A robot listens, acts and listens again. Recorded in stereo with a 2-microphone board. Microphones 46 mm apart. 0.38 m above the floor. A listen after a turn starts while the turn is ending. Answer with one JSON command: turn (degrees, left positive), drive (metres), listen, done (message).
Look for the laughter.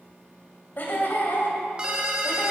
{"turn": 50}
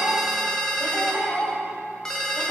{"turn": 35}
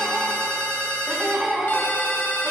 {"turn": -10}
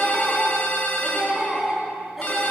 {"done": "Facing the laughter."}